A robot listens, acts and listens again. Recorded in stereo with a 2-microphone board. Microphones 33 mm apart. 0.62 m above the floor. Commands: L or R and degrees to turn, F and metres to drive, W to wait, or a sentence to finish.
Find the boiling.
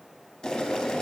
L20
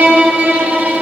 W
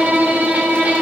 W
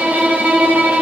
I heard boiling, but can't make it out now. It was about straight ahead or 140° left.